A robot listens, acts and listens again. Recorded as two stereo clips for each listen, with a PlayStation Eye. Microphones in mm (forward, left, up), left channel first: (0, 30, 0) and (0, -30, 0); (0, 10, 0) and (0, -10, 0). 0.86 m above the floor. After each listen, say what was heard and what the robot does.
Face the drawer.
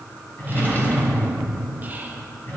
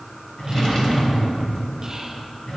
The drawer: about 35° left or 145° left. Turn 35° left.
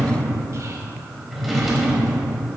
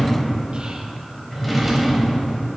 Facing the drawer, 1 to 2 m away.